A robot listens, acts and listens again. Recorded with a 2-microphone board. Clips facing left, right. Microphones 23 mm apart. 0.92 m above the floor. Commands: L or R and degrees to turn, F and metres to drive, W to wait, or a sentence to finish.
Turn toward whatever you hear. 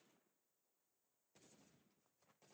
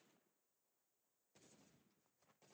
W
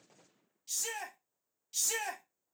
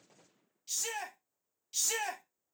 R30
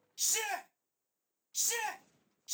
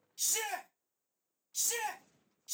L15
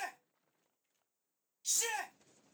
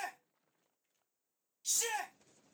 Facing the shout.